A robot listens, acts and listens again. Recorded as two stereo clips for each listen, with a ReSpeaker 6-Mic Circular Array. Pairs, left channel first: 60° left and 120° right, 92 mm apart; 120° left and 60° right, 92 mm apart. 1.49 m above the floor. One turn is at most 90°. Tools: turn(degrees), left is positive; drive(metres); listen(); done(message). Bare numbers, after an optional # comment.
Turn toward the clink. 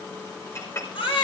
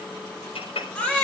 # The clink: 120° left.
turn(90)
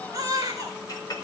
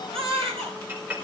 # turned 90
# The clink is now 10° left.
turn(10)
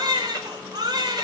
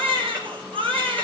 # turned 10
listen()
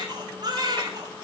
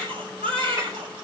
listen()
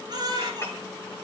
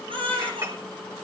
done("Facing the clink, over 4 m away.")